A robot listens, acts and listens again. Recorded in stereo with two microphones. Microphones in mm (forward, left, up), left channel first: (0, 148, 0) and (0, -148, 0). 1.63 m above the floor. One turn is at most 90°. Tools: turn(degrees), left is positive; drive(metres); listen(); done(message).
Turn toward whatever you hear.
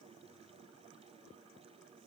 listen()
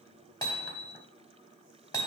turn(degrees=30)
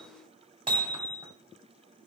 turn(degrees=-20)
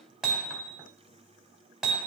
done("Found it: hammering, straight ahead, 2 to 4 m away.")